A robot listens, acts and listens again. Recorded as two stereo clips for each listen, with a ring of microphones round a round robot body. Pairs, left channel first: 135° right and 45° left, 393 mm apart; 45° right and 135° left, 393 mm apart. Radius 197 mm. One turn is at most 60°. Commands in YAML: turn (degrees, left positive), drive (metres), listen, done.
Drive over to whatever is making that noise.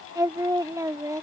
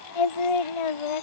turn: -35
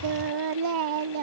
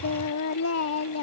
turn: 10
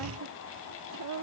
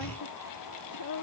drive: 1.0
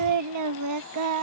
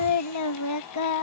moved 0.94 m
drive: 1.0
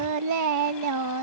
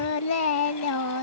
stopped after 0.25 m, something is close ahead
done: "Arrived at the singing, straight ahead."